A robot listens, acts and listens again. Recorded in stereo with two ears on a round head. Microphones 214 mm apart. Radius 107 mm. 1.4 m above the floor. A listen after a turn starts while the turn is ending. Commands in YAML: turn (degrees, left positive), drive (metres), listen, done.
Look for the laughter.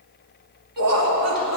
turn: -70
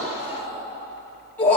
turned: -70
turn: 10
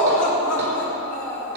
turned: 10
turn: 10
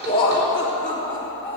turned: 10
done: "Found it: laughter, straight ahead, over 4 m away."